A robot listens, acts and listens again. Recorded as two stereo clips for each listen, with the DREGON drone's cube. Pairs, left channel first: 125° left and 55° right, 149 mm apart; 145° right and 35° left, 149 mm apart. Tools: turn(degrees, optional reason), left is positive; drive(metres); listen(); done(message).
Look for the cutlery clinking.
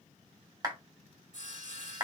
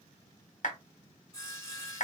listen()
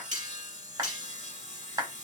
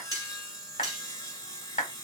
turn(degrees=-25, reason="The cutlery clinking: 25° right.")
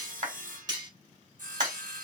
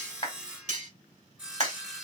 done("Facing the cutlery clinking.")